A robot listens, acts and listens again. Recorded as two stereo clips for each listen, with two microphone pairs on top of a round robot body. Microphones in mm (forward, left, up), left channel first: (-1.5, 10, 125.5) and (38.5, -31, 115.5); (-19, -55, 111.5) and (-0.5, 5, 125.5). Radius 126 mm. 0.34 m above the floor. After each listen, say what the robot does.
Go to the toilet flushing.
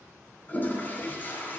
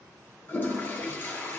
Turn 165° right.
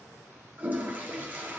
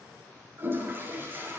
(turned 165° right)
Turn 15° left.
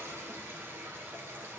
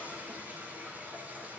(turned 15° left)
Drive 1.0 m forward.
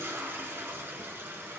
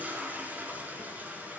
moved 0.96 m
Drive 1.0 m forward.
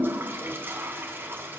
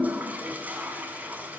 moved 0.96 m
Drive 1.0 m forward.
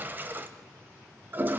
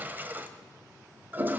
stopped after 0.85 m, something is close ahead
Arrived at the toilet flushing, straight ahead.